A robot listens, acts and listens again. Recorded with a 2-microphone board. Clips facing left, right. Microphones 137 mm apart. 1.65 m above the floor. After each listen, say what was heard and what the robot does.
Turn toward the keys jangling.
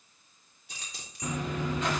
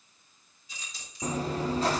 Turn 90° left.
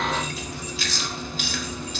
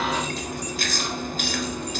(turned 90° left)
Keep listening.
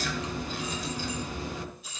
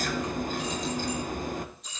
Facing the keys jangling, over 4 m away.